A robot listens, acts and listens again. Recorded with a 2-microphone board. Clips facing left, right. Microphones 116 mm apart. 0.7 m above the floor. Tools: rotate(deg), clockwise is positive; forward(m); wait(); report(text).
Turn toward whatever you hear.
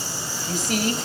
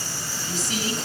rotate(-55)
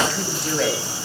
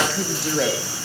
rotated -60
report("Facing the woman speaking, 2 to 4 m away.")